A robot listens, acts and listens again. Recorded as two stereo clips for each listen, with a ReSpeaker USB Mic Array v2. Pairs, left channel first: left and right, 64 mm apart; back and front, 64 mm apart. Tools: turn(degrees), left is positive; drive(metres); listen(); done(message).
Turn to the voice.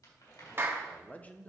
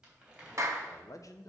turn(degrees=155)
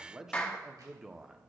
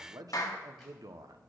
turn(degrees=-10)
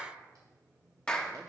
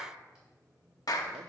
listen()
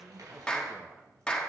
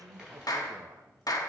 done("Found it: a man speaking, straight ahead, under 1 m away.")